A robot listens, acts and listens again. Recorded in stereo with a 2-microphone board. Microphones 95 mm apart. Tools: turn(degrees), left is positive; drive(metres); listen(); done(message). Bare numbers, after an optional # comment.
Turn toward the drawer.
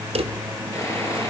turn(-90)
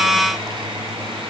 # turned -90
listen()
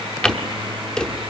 done("Found it: a drawer, straight ahead.")